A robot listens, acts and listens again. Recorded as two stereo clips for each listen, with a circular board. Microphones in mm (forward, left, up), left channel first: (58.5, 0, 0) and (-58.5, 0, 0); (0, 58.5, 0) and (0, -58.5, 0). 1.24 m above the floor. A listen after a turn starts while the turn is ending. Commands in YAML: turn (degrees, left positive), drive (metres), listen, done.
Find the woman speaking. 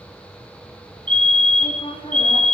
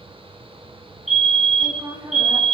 turn: -35
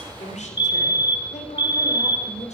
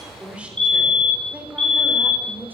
turn: -15
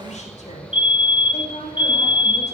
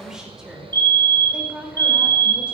turn: -10
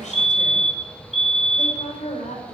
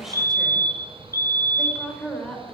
done: "Found it: a woman speaking, straight ahead, over 4 m away."